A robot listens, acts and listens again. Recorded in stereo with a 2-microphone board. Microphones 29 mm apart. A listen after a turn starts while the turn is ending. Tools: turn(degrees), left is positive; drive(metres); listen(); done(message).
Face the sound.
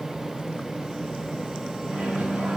turn(degrees=-50)
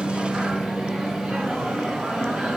turn(degrees=-75)
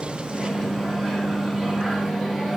done("Facing the microwave, 2 to 4 m away.")